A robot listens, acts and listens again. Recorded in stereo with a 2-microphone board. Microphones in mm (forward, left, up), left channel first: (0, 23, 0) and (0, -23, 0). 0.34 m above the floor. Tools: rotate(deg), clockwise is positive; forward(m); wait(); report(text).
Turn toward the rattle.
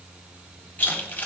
rotate(-35)
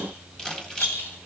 rotate(-105)
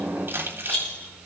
rotate(-30)
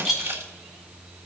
report("Facing the rattle.")